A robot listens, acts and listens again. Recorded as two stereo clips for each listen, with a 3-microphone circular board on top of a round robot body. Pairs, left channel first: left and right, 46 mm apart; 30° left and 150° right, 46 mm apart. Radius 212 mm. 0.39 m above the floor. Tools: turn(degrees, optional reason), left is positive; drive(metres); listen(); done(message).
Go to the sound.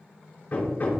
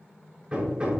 turn(degrees=140, reason="The hammering: 140° left.")
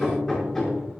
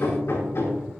turn(degrees=15, reason="The hammering is now 15° left.")
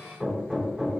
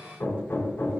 drive(metres=1.0)
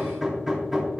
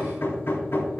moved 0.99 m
drive(metres=1.0)
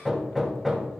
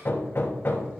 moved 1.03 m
drive(metres=1.0)
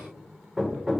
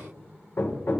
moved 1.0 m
drive(metres=1.0)
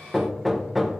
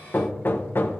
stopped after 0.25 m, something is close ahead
done("Arrived at the hammering, straight ahead.")